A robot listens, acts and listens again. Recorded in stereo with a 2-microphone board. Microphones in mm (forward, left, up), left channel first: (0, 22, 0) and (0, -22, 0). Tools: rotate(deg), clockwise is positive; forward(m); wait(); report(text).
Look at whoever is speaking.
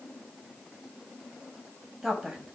rotate(30)
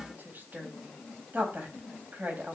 rotate(135)
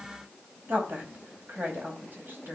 rotate(55)
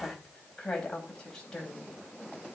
rotate(-15)
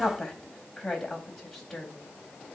rotate(-10)
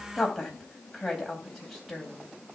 report("Facing the woman speaking, 2 to 4 m away.")